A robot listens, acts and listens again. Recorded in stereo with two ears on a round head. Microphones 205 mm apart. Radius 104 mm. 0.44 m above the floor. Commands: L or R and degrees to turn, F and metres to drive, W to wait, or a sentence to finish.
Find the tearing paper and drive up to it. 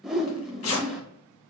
L90
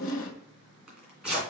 F1.0
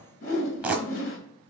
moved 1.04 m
F1.0
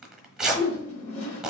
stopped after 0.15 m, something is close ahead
I am next to the tearing paper.